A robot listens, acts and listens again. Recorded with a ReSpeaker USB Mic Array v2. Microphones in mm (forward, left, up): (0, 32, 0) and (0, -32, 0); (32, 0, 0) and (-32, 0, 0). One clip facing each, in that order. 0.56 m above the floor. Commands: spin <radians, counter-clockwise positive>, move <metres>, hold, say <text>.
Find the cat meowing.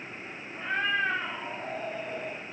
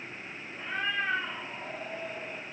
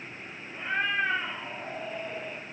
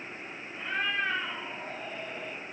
spin 1.40
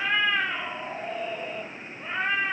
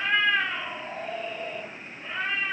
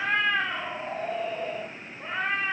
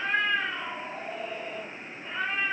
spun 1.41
spin 0.61
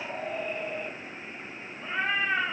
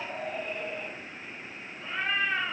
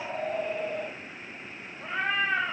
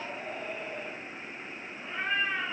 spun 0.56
spin 0.35
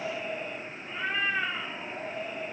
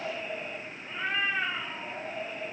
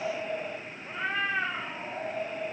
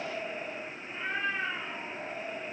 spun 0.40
say Facing the cat meowing, 1 to 2 m away.